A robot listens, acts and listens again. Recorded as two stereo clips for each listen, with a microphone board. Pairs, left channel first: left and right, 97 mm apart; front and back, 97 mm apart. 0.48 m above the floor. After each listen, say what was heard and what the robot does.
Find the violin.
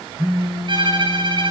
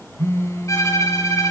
The violin: 55° right. Turn 55° right.
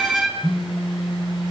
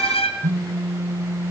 Found it: a violin, straight ahead.